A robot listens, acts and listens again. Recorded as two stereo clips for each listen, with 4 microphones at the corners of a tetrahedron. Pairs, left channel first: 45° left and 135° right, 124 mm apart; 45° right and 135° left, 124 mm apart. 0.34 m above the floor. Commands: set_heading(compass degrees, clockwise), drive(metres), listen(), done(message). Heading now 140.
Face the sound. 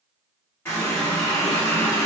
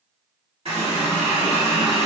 set_heading(25)
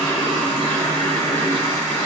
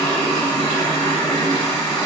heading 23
done("Found it: a running tap, straight ahead, 1 to 2 m away.")